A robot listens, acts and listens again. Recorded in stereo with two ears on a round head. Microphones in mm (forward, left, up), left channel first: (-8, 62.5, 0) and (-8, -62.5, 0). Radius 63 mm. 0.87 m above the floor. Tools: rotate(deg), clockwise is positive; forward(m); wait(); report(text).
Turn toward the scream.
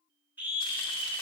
rotate(30)
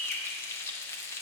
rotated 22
rotate(-10)
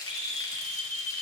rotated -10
report("Found it: a scream, straight ahead.")